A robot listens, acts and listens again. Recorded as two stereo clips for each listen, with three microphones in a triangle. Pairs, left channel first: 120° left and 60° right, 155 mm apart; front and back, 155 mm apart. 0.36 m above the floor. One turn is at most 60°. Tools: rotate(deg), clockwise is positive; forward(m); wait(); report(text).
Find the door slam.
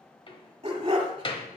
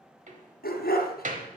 rotate(-60)
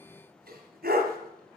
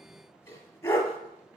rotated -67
rotate(-60)
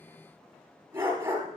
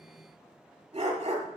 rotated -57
rotate(-45)
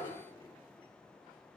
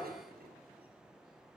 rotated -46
report("I heard a door slam from this way, but can't make it out now.")